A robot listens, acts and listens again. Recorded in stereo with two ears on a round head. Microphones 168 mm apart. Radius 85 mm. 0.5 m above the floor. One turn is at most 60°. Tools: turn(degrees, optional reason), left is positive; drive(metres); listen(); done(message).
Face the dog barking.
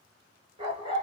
turn(degrees=-25, reason="The dog barking: about 25° right or 155° right.")
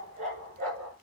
turn(degrees=-60, reason="So it is at 130° right.")
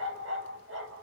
turn(degrees=-60, reason="The dog barking is now 70° right.")
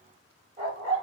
turn(degrees=-35, reason="The dog barking is now 35° right.")
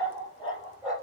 done("Facing the dog barking.")